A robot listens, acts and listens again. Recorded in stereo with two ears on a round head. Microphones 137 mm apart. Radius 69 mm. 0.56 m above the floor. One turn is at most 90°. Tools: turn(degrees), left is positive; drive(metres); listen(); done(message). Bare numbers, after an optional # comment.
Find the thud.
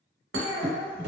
# The thud: about 65° right or 115° right.
turn(-65)
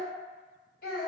listen()
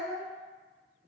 done("I heard a thud, but can't make it out now. It was about straight ahead or 50° right.")